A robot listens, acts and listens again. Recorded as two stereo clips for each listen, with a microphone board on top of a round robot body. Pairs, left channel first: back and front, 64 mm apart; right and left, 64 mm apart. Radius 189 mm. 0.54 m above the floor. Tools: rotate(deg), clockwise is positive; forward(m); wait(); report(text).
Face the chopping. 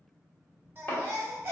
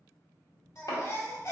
rotate(120)
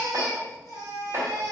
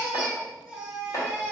rotate(50)
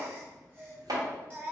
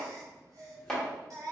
rotate(10)
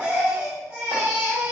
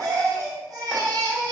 wait()
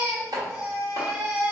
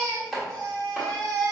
report("Facing the chopping, 1 to 2 m away.")